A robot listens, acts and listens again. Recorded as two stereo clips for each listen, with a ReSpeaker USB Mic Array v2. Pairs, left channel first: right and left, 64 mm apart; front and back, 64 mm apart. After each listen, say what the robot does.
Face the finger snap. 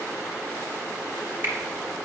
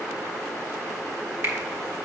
Turn 140° left.
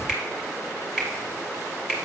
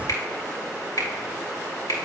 Turn 10° left.
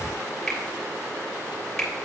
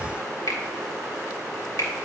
Found it: a finger snap, straight ahead.